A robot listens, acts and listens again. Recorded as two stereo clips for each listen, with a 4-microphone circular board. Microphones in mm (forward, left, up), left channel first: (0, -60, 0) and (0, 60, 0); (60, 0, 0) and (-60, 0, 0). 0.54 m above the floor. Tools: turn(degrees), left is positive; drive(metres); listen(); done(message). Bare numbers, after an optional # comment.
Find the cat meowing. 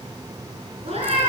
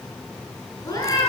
# The cat meowing: 60° left.
turn(60)
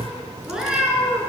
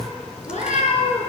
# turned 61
# The cat meowing is now 10° left.
turn(10)
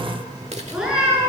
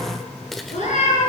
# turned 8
# The cat meowing is now 10° left.
turn(10)
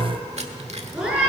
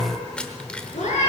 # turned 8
# The cat meowing is now 10° left.
turn(10)
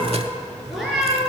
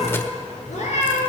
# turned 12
done("Facing the cat meowing, over 4 m away.")